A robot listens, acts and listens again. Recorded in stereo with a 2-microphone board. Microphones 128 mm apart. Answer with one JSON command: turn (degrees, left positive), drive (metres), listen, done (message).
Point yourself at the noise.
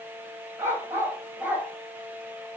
{"turn": -30}
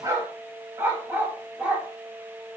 {"turn": -30}
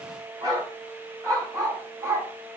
{"turn": -155}
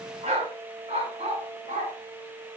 {"turn": -55}
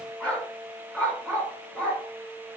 {"turn": 10}
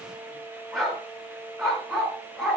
{"done": "Found it: a dog barking, straight ahead, 2 to 4 m away."}